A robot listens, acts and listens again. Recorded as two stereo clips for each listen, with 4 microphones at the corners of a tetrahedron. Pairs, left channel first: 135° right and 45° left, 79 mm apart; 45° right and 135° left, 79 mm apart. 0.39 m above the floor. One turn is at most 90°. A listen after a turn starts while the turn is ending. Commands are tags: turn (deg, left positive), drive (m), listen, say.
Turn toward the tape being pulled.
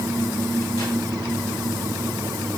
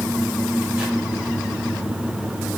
<listen/>
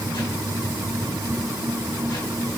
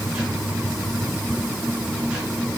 <listen/>
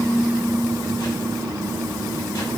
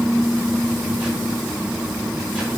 <say>I can't make out tape being pulled to turn to.</say>